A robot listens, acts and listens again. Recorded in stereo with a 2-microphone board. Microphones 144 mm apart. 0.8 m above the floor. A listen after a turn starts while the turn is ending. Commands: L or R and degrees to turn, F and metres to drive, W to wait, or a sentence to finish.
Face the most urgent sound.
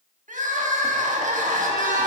R70
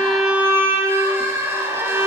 R20
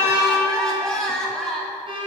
Found it: crying, straight ahead, 1 to 2 m away.